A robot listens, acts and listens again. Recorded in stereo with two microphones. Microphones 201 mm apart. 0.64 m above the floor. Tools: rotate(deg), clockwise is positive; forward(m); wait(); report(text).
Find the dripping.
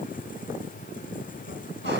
wait()
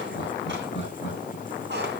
wait()
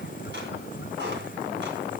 report("I can't make out dripping to turn to.")